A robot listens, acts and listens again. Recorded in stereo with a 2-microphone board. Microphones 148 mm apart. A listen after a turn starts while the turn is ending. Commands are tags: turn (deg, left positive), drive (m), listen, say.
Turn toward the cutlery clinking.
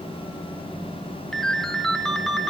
<listen/>
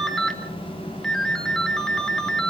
<listen/>
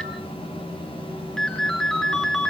<say>I can't make out cutlery clinking to turn to.</say>